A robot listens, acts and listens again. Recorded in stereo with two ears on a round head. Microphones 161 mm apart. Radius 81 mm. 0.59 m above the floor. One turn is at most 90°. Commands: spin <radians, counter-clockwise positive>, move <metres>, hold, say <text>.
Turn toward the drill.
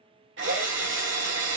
spin -1.13
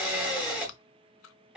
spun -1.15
say Found it: a drill, straight ahead.